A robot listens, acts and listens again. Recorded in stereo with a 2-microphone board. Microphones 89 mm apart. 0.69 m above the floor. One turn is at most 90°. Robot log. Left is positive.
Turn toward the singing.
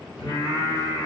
note: The singing: about 55° left or 125° left.
cmd yaw +55
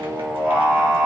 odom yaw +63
note: So it is at 25° right.
cmd yaw -25
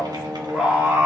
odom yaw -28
note: The singing is now 15° right.
cmd yaw -15
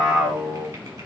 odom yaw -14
note: The singing is now 15° right.
cmd yaw -15
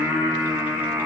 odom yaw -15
note: The singing is now 20° right.
cmd yaw -20
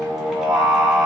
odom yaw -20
end: Found it: singing, straight ahead, 2 to 4 m away.